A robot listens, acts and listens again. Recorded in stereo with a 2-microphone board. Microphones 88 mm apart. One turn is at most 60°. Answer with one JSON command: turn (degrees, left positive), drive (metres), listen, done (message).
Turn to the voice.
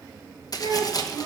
{"turn": -55}
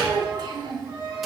{"turn": -55}
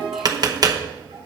{"listen": true}
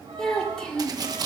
{"turn": 10}
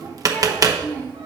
{"turn": 20}
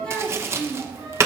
{"turn": 10}
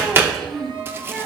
{"done": "Facing the child speaking."}